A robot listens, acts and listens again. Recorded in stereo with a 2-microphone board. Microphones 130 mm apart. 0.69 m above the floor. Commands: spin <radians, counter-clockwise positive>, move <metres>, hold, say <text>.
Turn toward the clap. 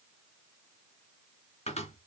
hold
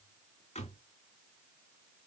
hold
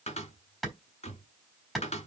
spin 0.52
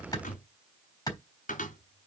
spin 2.62
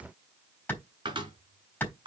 spin 0.26
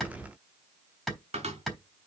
say Facing the clap, over 4 m away.